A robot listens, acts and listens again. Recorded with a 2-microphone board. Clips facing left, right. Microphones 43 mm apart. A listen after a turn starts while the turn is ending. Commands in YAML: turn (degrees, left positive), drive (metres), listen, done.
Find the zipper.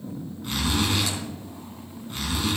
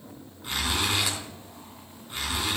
turn: -30
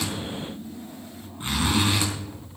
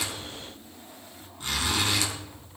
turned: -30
turn: 25
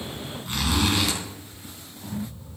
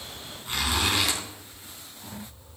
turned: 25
done: "Facing the zipper."